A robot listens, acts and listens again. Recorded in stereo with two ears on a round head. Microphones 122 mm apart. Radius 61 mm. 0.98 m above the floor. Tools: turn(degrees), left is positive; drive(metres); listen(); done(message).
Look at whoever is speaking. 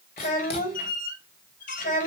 turn(degrees=65)
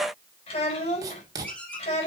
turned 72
turn(degrees=45)
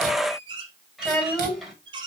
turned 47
done("Facing the child speaking.")